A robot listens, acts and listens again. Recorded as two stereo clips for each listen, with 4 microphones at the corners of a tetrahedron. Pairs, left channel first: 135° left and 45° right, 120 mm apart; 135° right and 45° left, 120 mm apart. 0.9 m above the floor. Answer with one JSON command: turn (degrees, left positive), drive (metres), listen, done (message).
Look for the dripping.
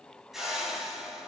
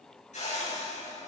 {"listen": true}
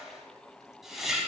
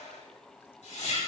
{"listen": true}
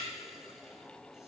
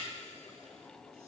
{"done": "I can't make out dripping, only a whoosh."}